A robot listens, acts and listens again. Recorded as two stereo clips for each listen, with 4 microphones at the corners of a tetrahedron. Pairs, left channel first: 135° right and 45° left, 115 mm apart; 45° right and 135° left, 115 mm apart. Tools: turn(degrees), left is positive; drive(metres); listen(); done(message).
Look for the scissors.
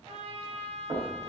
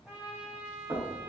listen()
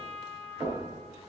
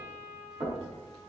listen()
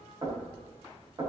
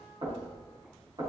done("I can't make out scissors to turn to.")